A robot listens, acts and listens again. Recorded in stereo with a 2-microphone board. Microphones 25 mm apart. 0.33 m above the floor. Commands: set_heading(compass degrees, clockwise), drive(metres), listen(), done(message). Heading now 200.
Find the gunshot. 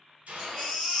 set_heading(275)
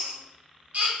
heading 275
listen()
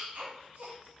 done("I heard a gunshot, but can't make it out now. It was about straight ahead or 30° right.")